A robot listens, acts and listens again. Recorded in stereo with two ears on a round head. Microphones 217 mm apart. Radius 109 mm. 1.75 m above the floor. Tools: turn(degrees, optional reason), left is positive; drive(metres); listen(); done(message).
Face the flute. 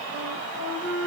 turn(degrees=-55, reason="The flute: about 55° right or 125° right.")
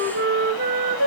turn(degrees=-50, reason="So it is at 50° right.")
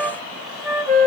done("Facing the flute.")